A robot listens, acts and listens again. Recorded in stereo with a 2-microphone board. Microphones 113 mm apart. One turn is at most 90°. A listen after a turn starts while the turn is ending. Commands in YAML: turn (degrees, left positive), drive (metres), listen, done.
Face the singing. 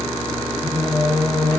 turn: 90
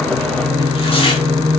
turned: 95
turn: 10
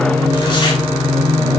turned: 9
done: "Facing the singing, 2 to 4 m away."